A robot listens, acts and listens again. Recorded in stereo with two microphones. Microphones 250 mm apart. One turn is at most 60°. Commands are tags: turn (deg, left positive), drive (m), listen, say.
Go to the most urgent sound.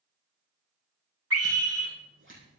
<turn deg="-60"/>
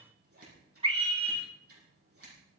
<turn deg="-25"/>
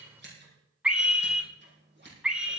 <drive m="1.0"/>
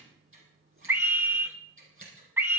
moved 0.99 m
<turn deg="-10"/>
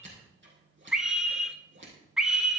<drive m="1.0"/>
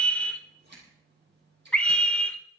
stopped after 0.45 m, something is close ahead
<say>Arrived at the scream, straight ahead.</say>